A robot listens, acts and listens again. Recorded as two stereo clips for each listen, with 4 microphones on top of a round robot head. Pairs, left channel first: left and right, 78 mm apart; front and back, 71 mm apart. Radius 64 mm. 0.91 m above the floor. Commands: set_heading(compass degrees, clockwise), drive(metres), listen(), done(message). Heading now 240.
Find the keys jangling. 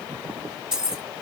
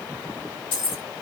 set_heading(250)
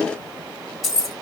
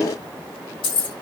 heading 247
done("Facing the keys jangling.")